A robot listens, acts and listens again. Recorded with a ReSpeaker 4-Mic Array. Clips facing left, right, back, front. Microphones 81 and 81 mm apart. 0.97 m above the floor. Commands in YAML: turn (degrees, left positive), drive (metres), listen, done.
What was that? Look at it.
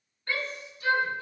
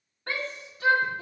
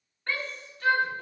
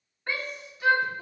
turn: -80
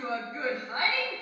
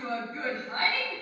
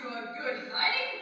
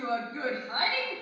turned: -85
done: "Found it: a shout, straight ahead."